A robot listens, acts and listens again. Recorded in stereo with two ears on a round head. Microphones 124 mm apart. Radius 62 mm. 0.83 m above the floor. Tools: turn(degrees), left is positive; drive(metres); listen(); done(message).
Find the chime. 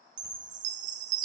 turn(degrees=-65)
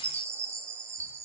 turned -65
turn(degrees=-25)
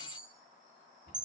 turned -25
turn(degrees=-10)
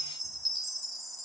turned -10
done("Found it: a chime, straight ahead, 1 to 2 m away.")